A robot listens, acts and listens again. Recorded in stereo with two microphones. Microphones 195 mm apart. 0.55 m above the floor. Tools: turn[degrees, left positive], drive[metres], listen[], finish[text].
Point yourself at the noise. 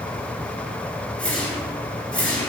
Action: turn[30]
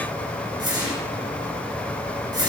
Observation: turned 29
Thought: So it is at 20° right.
Action: turn[-20]
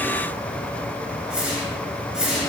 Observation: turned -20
Action: finish[Facing the whoosh, 2 to 4 m away.]